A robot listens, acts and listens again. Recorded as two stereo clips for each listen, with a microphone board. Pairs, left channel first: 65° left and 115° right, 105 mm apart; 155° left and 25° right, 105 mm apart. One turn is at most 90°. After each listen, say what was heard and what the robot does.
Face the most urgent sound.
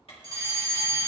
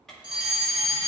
The fire alarm: 165° right. Turn 90° right.
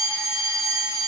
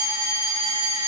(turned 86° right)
The fire alarm is now 75° right. Turn 75° right.
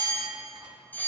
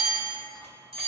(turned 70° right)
Facing the fire alarm, 1 to 2 m away.